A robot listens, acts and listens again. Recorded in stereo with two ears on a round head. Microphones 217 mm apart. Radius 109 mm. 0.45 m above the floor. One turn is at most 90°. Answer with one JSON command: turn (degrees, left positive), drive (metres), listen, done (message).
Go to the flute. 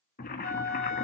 {"turn": -70}
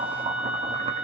{"drive": 1.0}
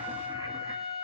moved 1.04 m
{"drive": 1.0}
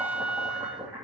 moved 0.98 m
{"drive": 1.0}
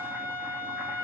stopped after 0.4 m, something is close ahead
{"turn": -10}
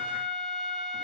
{"done": "I am next to the flute."}